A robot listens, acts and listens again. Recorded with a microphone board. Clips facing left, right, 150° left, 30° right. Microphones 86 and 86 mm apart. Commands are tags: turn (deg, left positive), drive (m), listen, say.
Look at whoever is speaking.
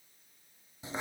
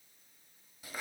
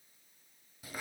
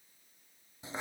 <listen/>
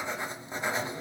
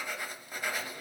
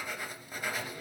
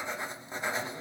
<listen/>
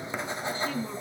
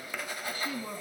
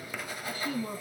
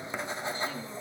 <turn deg="-170"/>
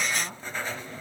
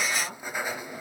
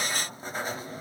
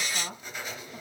<say>Found it: a woman speaking, straight ahead.</say>